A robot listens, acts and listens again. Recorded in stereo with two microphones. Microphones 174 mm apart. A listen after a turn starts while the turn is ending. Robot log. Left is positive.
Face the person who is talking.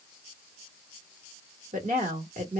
note: The woman speaking: about 50° right or 130° right.
cmd yaw -50
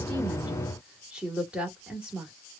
end: Found it: a woman speaking, straight ahead, 1 to 2 m away.